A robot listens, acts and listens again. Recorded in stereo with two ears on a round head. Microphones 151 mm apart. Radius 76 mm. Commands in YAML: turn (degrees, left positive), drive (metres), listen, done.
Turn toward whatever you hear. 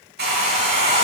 turn: -75
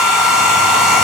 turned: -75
done: "Facing the hair dryer."